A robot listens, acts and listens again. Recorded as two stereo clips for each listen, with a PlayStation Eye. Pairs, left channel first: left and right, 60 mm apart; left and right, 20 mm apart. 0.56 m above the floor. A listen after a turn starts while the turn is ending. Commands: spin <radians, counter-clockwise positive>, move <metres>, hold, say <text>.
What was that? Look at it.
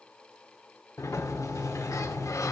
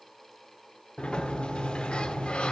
spin 1.05
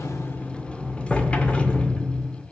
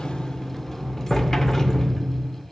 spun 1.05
spin 0.35
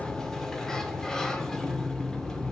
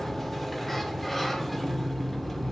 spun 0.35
spin 0.17
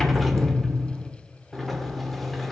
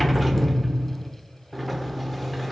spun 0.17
say Facing the sliding door.